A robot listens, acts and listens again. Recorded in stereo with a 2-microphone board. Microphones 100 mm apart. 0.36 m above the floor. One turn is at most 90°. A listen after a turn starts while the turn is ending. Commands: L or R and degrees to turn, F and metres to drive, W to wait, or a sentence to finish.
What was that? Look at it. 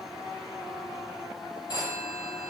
L50
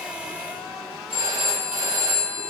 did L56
L75
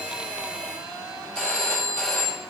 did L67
Found it: a phone ringing, straight ahead, over 4 m away.